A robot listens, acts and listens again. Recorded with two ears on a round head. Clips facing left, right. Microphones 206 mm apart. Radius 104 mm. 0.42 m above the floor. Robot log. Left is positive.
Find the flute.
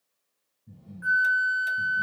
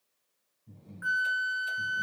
cmd yaw -30
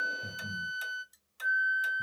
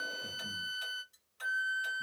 note: So it is at 135° right.
cmd yaw -135
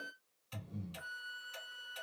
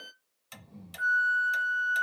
note: The flute is now 15° right.
cmd yaw -15
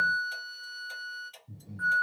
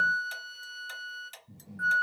end: Found it: a flute, straight ahead, 1 to 2 m away.